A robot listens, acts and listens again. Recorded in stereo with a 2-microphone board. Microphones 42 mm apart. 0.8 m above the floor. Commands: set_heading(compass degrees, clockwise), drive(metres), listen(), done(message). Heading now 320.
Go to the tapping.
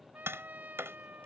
set_heading(50)
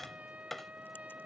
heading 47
drive(1.0)
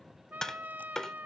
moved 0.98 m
set_heading(32)
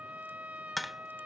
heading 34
drive(1.0)
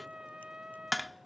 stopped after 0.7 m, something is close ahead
done("Arrived at the tapping, straight ahead.")